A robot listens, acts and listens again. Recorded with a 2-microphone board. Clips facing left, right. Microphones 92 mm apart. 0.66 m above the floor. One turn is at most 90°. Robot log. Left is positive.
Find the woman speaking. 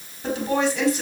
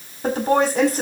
note: The woman speaking: about 40° right or 140° right.
cmd yaw -40
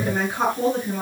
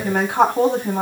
note: So it is at 105° right.
cmd yaw -90
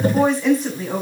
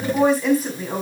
end: Facing the woman speaking, over 4 m away.